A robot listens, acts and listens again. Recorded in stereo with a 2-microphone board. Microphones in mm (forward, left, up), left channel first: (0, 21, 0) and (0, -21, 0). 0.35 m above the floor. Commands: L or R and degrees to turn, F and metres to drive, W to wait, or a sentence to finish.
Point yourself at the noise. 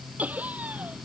R35
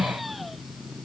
W
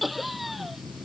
Found it: laughter, straight ahead.